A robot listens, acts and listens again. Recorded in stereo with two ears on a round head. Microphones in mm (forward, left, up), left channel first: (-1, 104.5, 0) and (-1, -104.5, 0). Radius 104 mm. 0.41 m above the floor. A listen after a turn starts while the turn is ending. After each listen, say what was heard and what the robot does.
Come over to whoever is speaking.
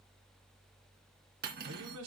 The man speaking: about 70° right or 110° right. Turn 70° right.
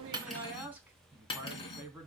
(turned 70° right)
So it is at 10° right. Turn 10° right.
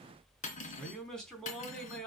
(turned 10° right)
Drive 1.0 m forward.
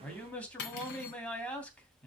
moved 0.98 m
Drive 1.0 m forward.
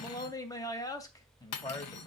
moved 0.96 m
The man speaking is now 20° left. Turn 20° left.
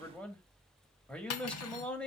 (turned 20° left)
Drive 1.0 m forward.
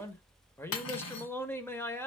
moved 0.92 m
The man speaking is now 15° left. Turn 15° left.
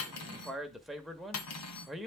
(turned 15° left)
Drive 1.0 m forward.
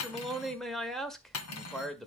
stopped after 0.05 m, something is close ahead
Arrived at the man speaking, straight ahead.